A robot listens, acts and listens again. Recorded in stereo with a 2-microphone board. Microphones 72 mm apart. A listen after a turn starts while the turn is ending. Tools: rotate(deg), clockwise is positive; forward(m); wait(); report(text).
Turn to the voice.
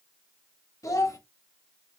rotate(-50)
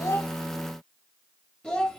rotate(-10)
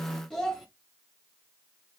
report("Found it: a child speaking, straight ahead.")